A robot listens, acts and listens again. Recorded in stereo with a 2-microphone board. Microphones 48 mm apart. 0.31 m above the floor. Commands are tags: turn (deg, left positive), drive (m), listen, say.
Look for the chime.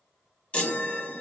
<turn deg="25"/>
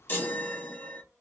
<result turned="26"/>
<turn deg="125"/>
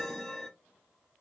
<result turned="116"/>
<turn deg="10"/>
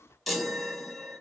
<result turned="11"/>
<say>Found it: a chime, straight ahead, 1 to 2 m away.</say>